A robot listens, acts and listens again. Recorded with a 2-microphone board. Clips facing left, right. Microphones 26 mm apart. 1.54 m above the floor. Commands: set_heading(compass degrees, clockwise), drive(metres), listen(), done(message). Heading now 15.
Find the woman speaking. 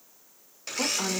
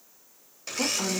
set_heading(340)
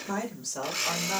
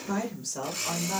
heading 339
set_heading(324)
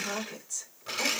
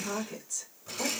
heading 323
done("Facing the woman speaking.")